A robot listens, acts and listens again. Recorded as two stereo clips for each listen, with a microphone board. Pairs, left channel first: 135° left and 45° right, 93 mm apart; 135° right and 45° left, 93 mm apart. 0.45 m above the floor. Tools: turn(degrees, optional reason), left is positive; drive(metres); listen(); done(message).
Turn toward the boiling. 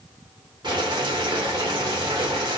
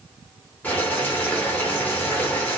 turn(degrees=-65, reason="The boiling: 65° right.")
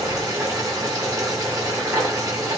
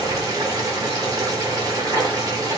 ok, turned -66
done("Facing the boiling.")